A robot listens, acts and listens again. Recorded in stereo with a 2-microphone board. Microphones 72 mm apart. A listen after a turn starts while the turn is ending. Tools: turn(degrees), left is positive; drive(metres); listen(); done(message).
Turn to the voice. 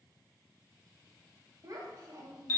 turn(degrees=-55)
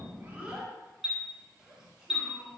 turn(degrees=-10)
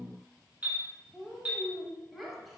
done("Found it: a child speaking, straight ahead, under 1 m away.")